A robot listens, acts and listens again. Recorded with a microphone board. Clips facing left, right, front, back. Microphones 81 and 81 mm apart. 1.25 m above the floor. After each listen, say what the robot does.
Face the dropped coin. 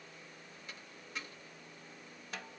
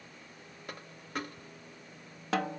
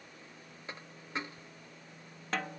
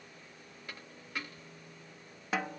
Turn 65° right.
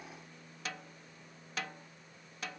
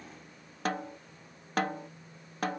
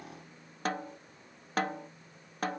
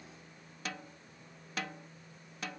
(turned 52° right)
Turn 10° right.
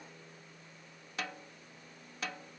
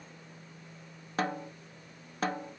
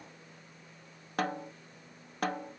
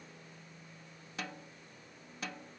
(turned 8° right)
I heard a dropped coin from this way, but can't make it out now.